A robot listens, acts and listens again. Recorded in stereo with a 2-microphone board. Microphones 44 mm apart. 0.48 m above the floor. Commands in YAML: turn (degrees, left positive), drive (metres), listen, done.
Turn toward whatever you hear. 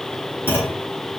turn: 60
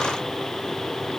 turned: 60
listen: true
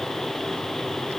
done: "I heard a clunk, but can't make it out now. It was about straight ahead or 60° left."